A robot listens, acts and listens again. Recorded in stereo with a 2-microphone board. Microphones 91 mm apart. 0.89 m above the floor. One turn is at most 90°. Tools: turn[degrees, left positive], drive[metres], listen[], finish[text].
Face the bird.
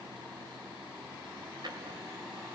Action: listen[]
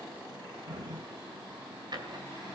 Action: listen[]
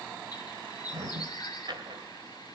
Thought: The bird: about 50° left or 130° left.
Action: turn[50]
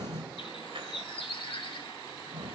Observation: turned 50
Thought: So it is at 80° left.
Action: turn[80]
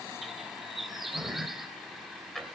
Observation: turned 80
Action: finish[Found it: a bird, straight ahead.]